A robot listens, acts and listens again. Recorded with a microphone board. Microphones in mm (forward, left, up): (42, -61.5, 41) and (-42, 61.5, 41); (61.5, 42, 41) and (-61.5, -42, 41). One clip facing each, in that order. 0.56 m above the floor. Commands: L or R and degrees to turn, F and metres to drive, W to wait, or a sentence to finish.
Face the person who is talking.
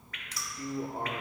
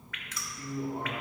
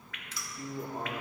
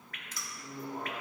R15
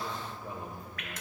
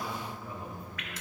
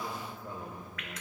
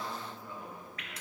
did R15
Facing the man speaking, 1 to 2 m away.